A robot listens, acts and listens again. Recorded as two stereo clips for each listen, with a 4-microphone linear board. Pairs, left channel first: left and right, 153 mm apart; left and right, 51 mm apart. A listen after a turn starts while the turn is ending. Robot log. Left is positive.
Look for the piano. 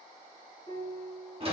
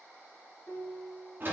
note: The piano: about 20° left or 160° left.
cmd yaw +20
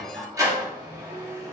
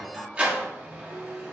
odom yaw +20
cmd idle
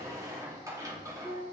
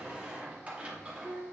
note: So it is at 140° left.
cmd yaw +140
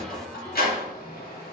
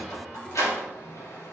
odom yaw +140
cmd idle
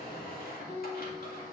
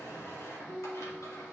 note: The piano is now 20° left.
cmd yaw +20
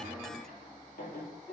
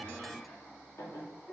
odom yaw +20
cmd idle
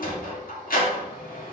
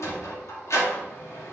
cmd idle
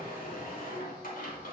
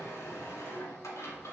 end: Facing where the piano came from. I can't hear it now.